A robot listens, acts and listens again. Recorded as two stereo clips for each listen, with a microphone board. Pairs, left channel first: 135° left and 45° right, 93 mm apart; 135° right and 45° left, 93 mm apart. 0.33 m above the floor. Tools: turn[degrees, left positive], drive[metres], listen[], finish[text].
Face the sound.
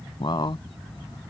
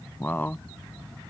Thought: The man speaking: 155° left.
Action: turn[155]
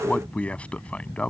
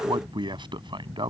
Thought: The man speaking is now 60° left.
Action: turn[60]
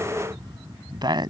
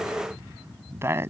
Thought: The man speaking is now 15° right.
Action: turn[-15]
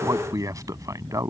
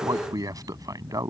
Action: finish[Facing the man speaking.]